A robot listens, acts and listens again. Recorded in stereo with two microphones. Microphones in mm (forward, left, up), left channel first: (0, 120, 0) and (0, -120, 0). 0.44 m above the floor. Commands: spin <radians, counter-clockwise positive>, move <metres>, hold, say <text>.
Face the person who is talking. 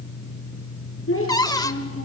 spin 1.05
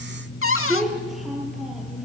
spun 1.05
say Found it: a child speaking, straight ahead, over 4 m away.